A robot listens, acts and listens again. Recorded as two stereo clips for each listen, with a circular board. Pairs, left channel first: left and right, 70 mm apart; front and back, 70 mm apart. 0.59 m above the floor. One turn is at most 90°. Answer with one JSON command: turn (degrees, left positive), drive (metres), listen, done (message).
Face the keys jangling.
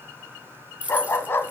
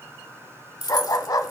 {"turn": -20}
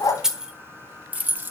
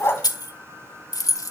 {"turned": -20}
{"turn": -30}
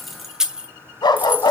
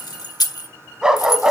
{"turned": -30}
{"turn": -30}
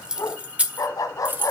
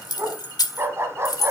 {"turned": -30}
{"turn": -30}
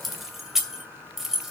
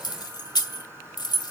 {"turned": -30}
{"done": "Facing the keys jangling, 2 to 4 m away."}